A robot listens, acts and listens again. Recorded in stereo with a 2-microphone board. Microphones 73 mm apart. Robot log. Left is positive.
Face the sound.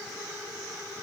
cmd idle
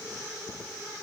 cmd idle
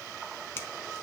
note: The finger snap: about 35° left or 145° left.
cmd yaw +35
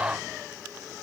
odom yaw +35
cmd idle
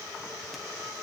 cmd idle
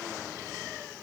end: I heard a finger snap, but can't make it out now. It was about straight ahead or 110° left.